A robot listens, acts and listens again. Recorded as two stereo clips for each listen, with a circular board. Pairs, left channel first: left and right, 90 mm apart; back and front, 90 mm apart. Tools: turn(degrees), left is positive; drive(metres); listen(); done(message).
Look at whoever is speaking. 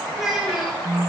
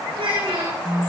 done("Found it: a child speaking, straight ahead, over 4 m away.")